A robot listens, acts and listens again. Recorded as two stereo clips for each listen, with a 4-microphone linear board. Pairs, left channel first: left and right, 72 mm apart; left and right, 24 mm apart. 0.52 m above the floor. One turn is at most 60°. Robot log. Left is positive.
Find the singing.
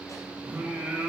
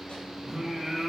cmd yaw -30
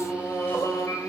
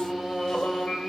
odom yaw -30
note: So it is at 50° left.
cmd yaw +50
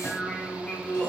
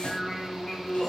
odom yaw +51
note: The singing is now 25° left.
cmd yaw +25
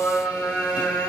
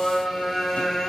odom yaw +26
note: The singing is now 20° left.
cmd yaw +20
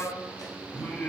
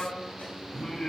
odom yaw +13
note: The singing is now 10° left.
cmd yaw +10
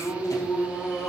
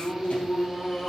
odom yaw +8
end: Found it: singing, straight ahead, 2 to 4 m away.